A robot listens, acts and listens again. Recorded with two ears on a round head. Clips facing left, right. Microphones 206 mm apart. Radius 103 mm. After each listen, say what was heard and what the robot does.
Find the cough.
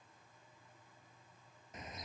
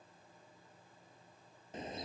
Keep listening.
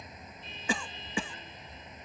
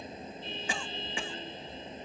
The cough: about 70° left or 110° left. Turn 70° left.
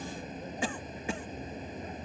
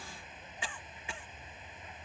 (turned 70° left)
So it is at 40° left. Turn 40° left.
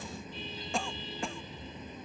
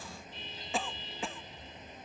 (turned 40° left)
Found it: a cough, straight ahead.